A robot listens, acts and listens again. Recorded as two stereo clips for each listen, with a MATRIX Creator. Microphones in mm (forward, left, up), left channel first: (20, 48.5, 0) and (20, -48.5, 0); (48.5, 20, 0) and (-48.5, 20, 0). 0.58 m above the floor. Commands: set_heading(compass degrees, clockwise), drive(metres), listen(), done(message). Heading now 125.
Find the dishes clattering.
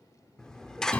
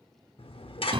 done("Facing the dishes clattering, under 1 m away.")